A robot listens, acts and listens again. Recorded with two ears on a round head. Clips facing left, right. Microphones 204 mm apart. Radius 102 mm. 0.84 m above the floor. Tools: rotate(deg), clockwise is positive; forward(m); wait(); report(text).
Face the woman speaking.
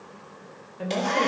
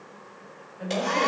rotate(-60)
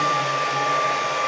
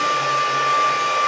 wait()
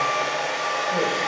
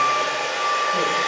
wait()
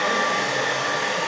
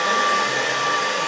report("I heard a woman speaking, but can't make it out now. It was about straight ahead or 60° left.")